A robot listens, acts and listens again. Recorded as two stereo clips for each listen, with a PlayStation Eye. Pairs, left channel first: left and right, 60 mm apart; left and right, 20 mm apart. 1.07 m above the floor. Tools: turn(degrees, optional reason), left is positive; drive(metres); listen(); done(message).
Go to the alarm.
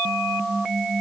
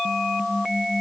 listen()
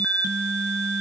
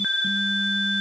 listen()
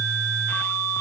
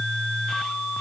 done("I can't make out an alarm.")